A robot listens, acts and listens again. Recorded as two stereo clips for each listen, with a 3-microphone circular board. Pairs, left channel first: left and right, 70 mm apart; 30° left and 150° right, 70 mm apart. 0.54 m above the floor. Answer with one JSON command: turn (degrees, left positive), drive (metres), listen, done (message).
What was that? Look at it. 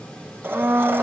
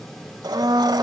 {"turn": -150}
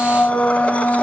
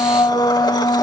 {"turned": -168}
{"turn": 20}
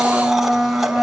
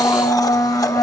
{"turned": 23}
{"done": "Facing the blender."}